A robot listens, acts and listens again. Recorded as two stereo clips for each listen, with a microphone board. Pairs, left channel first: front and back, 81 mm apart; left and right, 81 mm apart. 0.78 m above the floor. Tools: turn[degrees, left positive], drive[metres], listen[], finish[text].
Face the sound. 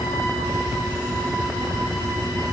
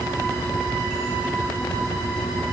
Action: listen[]
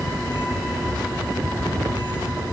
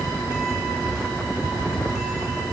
Action: listen[]
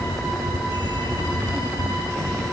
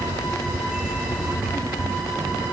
Action: finish[I can't make out anything.]